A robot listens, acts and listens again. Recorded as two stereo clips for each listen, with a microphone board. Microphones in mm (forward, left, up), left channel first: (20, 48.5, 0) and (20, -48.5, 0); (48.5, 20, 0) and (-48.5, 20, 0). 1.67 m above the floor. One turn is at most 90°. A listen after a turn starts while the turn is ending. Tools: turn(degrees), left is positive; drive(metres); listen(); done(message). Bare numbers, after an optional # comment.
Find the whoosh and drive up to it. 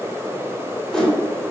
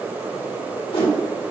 # The whoosh: 10° left.
turn(10)
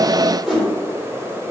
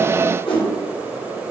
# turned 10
drive(1.0)
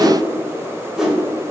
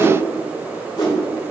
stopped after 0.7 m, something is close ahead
done("I am next to the whoosh.")